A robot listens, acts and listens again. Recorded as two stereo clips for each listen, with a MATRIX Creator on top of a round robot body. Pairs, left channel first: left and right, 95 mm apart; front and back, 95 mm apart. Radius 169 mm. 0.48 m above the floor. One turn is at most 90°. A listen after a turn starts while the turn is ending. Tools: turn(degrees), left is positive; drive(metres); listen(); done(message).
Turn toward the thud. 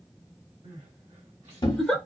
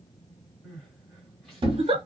turn(degrees=90)
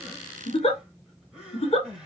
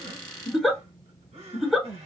turn(degrees=50)
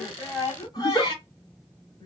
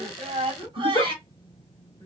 done("Facing where the thud came from. I can't hear it now.")